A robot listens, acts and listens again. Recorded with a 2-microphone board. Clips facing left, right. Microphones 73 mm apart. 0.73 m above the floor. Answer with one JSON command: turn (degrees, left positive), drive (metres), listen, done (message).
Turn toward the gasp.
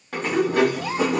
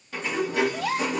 {"turn": -90}
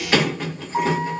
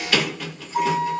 {"done": "Facing where the gasp came from. I can't hear it now."}